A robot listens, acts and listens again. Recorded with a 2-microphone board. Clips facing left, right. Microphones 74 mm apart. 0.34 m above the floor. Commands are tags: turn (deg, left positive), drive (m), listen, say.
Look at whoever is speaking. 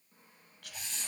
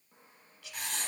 <turn deg="55"/>
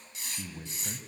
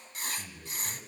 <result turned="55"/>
<turn deg="35"/>
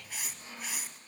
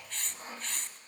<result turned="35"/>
<listen/>
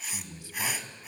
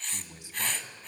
<turn deg="-25"/>
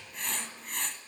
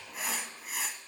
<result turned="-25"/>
<listen/>
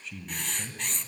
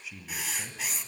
<turn deg="-10"/>
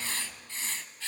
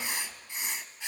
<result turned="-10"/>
<listen/>
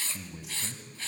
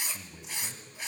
<say>Found it: a man speaking, straight ahead, 2 to 4 m away.</say>